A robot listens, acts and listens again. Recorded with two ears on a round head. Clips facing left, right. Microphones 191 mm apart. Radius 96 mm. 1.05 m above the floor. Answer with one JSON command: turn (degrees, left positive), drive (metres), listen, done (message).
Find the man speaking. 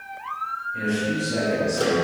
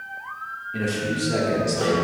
{"turn": -75}
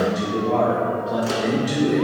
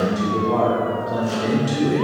{"done": "Facing the man speaking."}